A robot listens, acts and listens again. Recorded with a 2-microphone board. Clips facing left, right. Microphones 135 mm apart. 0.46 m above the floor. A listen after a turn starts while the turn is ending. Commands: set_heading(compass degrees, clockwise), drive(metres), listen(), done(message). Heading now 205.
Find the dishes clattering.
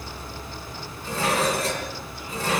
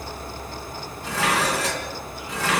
set_heading(295)
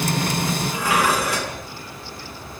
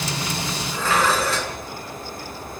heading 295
set_heading(280)
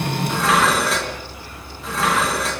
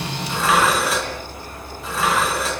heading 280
done("Facing the dishes clattering.")